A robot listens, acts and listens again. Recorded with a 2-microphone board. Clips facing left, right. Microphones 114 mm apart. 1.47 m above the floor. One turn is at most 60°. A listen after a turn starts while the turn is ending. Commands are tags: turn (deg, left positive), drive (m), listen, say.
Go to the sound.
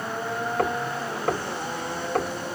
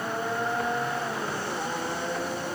<turn deg="60"/>
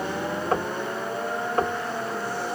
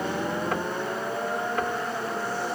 <turn deg="40"/>
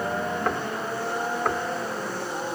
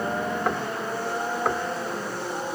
<drive m="1.0"/>
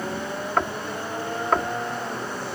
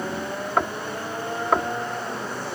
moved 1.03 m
<drive m="1.0"/>
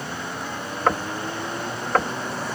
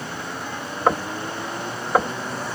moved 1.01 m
<turn deg="-15"/>
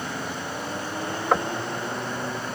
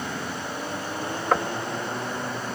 <drive m="1.0"/>
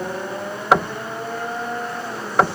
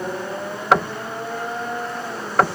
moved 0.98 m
<drive m="1.0"/>
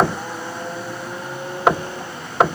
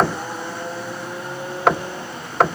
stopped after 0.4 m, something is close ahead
<say>Arrived at the knocking, straight ahead.</say>